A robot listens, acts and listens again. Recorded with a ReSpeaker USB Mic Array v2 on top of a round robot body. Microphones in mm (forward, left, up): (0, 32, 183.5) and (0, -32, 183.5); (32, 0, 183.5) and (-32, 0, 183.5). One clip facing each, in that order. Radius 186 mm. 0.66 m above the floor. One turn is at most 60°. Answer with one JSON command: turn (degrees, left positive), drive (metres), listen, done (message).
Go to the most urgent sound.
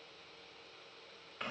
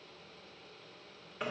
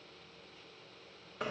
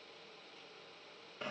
{"listen": true}
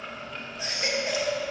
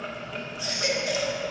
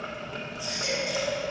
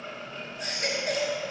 {"turn": 60}
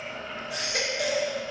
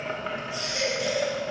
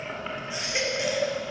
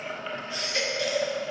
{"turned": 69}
{"turn": 60}
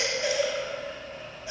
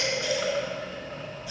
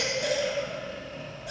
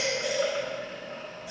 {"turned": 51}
{"turn": 25}
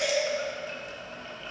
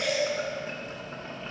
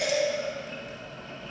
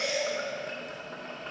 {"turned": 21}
{"drive": 1.0}
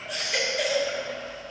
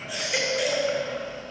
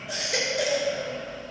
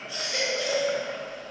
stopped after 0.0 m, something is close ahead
{"done": "Something is in my way. I am facing the baby crying but have not reached it."}